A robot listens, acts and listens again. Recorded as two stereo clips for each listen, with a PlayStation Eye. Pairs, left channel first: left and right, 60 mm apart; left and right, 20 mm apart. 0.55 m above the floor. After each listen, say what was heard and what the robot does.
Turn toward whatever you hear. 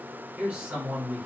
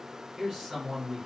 The man speaking: about 25° right or 155° right. Turn 25° right.
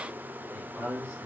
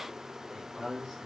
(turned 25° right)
So it is at 130° right. Turn 130° right.
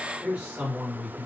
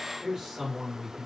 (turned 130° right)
The man speaking is now 35° right. Turn 35° right.
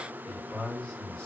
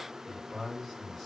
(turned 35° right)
The man speaking is now 10° left. Turn 10° left.
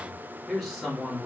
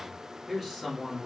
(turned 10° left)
Found it: a man speaking, straight ahead, 1 to 2 m away.